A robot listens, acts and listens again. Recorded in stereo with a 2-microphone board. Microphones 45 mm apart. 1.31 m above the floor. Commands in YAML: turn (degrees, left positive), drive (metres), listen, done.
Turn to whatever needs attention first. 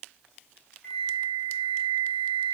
listen: true
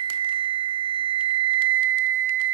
listen: true
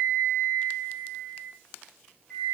done: "I can't make out anything urgent to turn to."